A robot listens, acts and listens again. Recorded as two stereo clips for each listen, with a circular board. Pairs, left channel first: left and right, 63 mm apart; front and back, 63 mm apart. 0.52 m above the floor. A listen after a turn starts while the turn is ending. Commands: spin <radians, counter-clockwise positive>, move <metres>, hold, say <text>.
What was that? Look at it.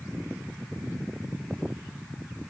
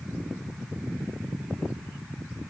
hold
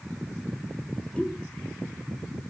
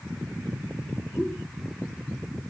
spin 0.52
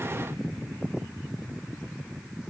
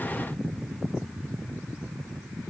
say I heard a pop from this way, but can't make it out now.